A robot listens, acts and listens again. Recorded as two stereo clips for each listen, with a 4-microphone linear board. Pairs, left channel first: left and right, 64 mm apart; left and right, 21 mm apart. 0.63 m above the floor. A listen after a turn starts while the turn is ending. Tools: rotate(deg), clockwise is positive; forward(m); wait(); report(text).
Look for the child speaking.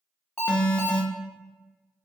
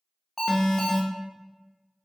wait()
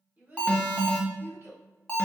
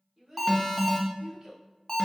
rotate(35)
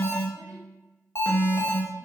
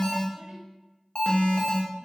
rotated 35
wait()
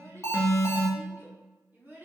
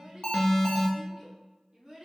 rotate(30)
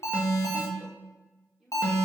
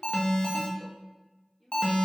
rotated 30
report("Found it: a child speaking, straight ahead.")